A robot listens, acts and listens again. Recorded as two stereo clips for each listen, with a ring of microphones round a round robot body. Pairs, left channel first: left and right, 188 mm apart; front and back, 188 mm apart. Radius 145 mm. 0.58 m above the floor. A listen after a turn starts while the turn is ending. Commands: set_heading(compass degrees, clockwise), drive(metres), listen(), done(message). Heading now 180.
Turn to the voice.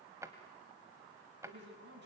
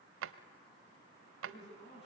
set_heading(250)
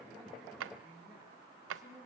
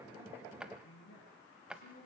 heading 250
done("Found it: a man speaking, straight ahead, over 4 m away.")